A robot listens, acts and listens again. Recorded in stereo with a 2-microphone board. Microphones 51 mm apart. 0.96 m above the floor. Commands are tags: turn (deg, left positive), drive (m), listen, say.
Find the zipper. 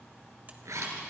<turn deg="-90"/>
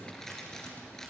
<turn deg="10"/>
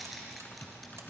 <say>Found it: a zipper, straight ahead.</say>